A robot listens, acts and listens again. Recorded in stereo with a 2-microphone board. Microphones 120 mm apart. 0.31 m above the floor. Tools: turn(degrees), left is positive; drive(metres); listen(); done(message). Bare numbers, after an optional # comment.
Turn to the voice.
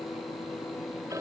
listen()
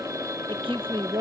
# The woman speaking: about 45° right or 135° right.
turn(-45)
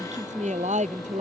# So it is at 85° right.
turn(-85)
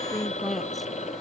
done("Found it: a woman speaking, straight ahead.")